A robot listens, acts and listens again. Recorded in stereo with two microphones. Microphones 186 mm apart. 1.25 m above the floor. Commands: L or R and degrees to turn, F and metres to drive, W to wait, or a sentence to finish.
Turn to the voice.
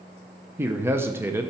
R30
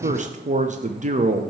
R135
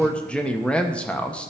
Found it: a man speaking, straight ahead, under 1 m away.